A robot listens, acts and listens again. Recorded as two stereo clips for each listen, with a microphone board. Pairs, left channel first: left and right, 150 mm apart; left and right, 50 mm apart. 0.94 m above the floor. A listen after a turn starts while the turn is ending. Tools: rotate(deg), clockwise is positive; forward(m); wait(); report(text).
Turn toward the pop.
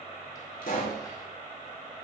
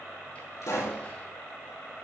rotate(-90)
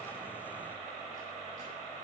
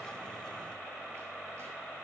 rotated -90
report("I heard a pop from this way, but can't make it out now.")